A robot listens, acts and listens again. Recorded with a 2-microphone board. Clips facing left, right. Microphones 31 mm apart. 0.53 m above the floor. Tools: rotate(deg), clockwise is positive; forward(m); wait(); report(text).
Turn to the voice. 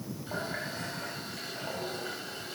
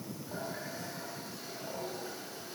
wait()
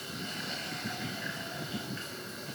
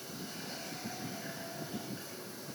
wait()
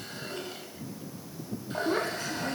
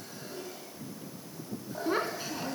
rotate(20)
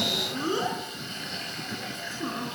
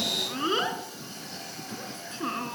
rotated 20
rotate(135)
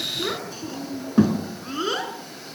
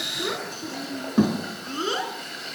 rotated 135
report("Found it: a child speaking, straight ahead, 2 to 4 m away.")